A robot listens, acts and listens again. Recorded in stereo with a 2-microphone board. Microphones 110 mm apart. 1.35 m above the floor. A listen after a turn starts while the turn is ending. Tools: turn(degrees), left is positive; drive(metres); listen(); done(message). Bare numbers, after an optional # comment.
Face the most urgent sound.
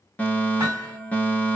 turn(30)
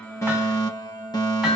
# So it is at 135° left.
turn(135)
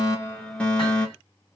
# The fire alarm is now 10° left.
turn(10)
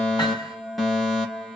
done("Facing the fire alarm, 2 to 4 m away.")